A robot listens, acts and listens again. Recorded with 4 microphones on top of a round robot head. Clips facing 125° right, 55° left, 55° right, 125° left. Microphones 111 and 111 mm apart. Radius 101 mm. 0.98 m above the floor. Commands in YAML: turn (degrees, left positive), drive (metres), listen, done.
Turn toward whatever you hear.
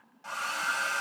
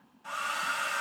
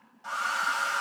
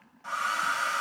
turn: -125
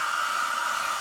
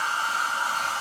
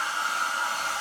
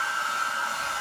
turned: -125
done: "Found it: a hair dryer, straight ahead, 1 to 2 m away."